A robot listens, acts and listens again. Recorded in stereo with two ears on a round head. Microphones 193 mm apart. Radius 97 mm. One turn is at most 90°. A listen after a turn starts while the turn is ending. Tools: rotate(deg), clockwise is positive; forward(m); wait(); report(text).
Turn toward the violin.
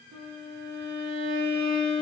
rotate(90)
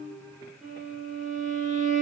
report("Facing the violin, 2 to 4 m away.")